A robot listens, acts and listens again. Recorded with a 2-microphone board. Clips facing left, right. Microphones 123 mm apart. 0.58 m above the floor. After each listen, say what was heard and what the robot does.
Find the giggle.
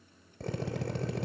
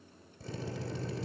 Keep listening.
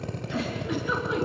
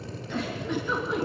Turn 30° left.
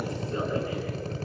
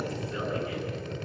Keep listening.
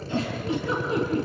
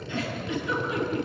So it is at 140° left. Turn 140° left.
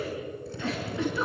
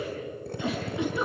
The giggle is now 15° right. Turn 15° right.
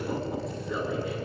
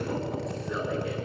Found it: a giggle, straight ahead, over 4 m away.